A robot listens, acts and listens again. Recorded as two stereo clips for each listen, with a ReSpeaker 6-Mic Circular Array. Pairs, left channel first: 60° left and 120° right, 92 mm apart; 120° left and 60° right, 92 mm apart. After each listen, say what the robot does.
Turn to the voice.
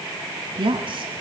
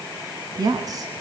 Turn 105° right.
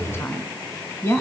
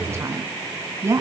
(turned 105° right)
Facing the woman speaking.